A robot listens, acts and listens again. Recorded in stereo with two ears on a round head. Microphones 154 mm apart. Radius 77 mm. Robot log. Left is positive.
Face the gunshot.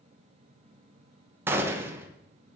cmd yaw -30
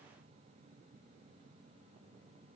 cmd idle
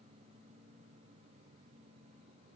end: I heard a gunshot, but can't make it out now. It was about 15° left or 135° right.